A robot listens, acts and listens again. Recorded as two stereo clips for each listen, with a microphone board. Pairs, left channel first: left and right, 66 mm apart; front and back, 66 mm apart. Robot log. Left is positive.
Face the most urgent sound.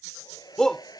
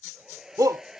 note: The shout: 170° left.
cmd yaw +170
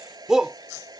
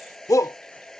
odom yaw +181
note: The shout is now 10° right.
cmd yaw -10
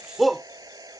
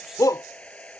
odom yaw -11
end: Facing the shout.